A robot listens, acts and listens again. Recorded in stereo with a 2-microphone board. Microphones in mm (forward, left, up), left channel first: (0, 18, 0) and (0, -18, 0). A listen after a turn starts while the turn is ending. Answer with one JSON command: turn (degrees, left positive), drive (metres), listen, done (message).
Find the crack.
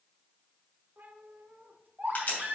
{"turn": 45}
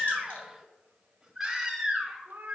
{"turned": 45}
{"listen": true}
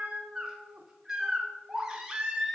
{"done": "I heard a crack, but can't make it out now. It was about straight ahead or 90° left."}